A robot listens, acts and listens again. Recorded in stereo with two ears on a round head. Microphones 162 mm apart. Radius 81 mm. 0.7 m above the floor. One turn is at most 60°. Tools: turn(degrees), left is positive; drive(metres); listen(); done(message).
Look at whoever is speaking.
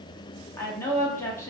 turn(degrees=30)
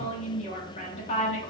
turn(degrees=60)
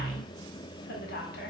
turn(degrees=60)
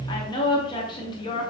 turn(degrees=30)
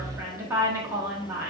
turn(degrees=-20)
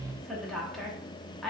done("Found it: a woman speaking, straight ahead.")